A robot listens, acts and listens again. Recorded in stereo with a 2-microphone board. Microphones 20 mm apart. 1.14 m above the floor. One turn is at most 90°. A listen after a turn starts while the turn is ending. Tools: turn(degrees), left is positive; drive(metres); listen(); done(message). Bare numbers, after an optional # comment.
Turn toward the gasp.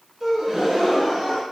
# The gasp: about 20° right or 160° right.
turn(-20)
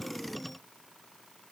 listen()
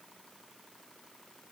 done("I heard a gasp, but can't make it out now. It was about straight ahead or 140° right.")